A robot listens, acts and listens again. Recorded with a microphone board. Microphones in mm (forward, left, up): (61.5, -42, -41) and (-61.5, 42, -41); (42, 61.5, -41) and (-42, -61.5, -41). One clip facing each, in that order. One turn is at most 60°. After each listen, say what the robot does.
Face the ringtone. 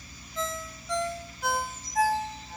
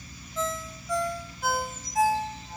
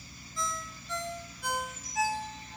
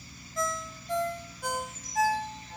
Turn 60° right.
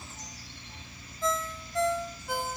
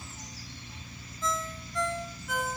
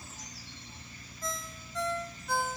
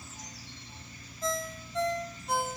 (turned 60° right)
Turn 60° right.
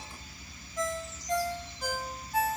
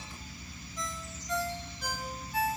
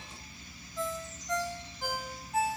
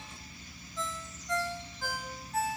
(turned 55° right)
Turn 15° right.
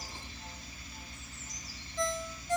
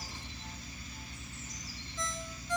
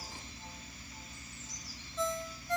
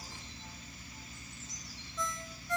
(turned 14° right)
Found it: a ringtone, straight ahead, 1 to 2 m away.